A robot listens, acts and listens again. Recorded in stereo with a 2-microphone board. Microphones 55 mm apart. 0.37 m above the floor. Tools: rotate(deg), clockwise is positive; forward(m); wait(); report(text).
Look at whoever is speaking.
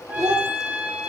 rotate(90)
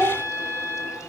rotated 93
rotate(10)
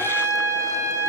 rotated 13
wait()
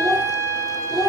report("Facing the child speaking.")